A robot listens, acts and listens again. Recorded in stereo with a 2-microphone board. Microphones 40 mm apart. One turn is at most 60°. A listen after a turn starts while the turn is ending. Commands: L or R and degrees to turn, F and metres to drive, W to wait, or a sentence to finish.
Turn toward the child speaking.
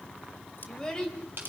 L15
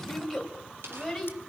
L30
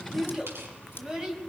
R15
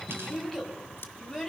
Facing the child speaking.